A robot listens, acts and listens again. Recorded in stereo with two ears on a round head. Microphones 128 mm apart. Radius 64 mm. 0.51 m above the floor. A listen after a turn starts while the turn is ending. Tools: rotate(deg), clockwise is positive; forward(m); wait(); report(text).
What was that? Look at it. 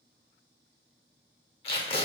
rotate(-35)
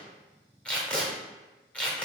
rotate(-10)
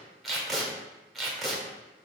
report("Found it: tape being pulled, straight ahead.")